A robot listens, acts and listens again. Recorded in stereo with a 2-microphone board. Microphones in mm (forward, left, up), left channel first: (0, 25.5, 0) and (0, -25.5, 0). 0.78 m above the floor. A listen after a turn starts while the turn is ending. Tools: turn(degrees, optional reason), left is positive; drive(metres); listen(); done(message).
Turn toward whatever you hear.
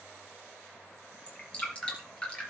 turn(degrees=25, reason="The dripping: about 25° left or 155° left.")
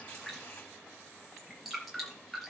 done("Found it: dripping, straight ahead.")